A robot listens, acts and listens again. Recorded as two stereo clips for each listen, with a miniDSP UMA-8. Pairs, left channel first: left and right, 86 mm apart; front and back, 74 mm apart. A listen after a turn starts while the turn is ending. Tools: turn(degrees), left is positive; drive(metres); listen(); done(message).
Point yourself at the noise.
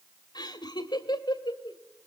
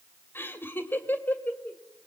turn(degrees=65)
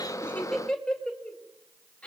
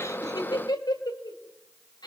turn(degrees=15)
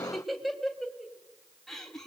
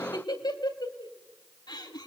done("Facing the laughter.")